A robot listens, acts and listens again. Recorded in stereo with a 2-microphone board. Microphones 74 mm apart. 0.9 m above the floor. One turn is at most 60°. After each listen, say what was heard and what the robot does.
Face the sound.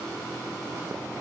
Keep listening.
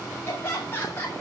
The laughter: about 30° left or 150° left. Turn 30° left.
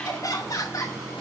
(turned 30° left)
So it is at 130° left. Turn 60° left.
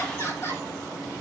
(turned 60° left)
The laughter is now 40° left. Turn 40° left.
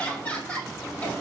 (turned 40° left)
The laughter is now 20° left. Turn 20° left.
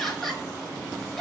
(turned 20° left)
Found it: laughter, straight ahead.